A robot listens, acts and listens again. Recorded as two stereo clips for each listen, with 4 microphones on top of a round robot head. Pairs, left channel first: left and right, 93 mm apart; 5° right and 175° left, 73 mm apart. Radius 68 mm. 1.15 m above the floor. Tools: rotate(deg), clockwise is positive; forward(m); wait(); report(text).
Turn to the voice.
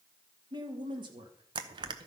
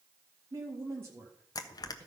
rotate(125)
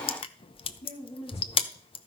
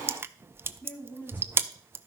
rotate(-60)
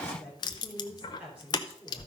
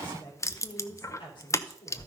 rotate(10)
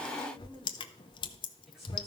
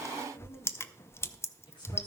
report("Facing the woman speaking, over 4 m away.")